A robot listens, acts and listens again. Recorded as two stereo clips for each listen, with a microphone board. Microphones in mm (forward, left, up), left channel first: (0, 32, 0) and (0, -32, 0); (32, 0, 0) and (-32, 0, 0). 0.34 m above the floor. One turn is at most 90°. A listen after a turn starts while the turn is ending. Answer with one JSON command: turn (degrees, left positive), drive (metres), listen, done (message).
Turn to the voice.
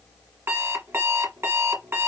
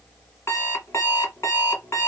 {"listen": true}
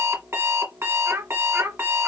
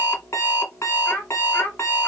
{"turn": -45}
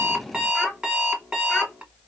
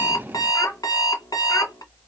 {"listen": true}
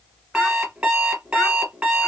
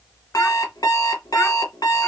{"listen": true}
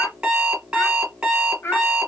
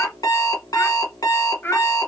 {"turn": 50}
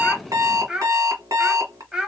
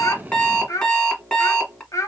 {"turn": -15}
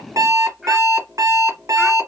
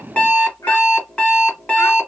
{"done": "Found it: a child speaking, straight ahead."}